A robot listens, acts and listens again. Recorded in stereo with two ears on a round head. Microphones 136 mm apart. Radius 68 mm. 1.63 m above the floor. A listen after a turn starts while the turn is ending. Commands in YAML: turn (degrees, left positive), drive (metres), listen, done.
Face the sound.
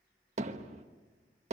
turn: -45
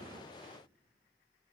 turn: -10
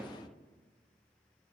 done: "Found it: hammering, straight ahead, 1 to 2 m away."